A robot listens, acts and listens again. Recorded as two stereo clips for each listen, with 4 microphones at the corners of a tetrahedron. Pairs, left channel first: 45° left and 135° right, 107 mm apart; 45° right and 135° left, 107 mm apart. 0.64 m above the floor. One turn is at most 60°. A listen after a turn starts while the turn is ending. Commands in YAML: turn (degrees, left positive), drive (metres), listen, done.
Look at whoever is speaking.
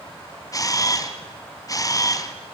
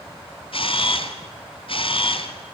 listen: true
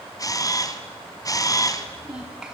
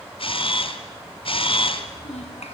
turn: -50
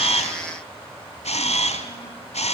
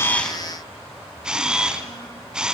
listen: true
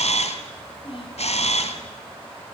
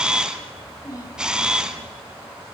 turn: 10
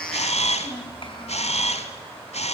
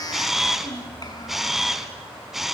done: "Found it: a child speaking, straight ahead."